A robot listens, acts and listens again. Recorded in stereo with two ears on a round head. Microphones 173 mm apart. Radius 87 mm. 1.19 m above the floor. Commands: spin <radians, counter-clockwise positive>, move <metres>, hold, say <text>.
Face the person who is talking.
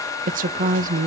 spin -0.79
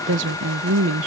spin -1.48
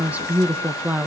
spin -0.17
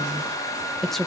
say Facing the woman speaking.